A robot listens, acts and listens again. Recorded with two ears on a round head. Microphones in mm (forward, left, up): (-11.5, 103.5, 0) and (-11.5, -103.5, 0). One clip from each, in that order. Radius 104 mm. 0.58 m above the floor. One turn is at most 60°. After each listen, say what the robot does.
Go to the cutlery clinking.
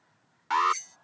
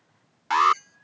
Turn 60° left.
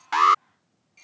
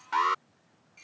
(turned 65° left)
Keep listening.
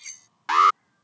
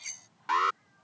Drive 1.0 m forward.
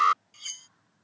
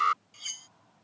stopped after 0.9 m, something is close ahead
Something is in my way. I am facing the cutlery clinking but have not reached it.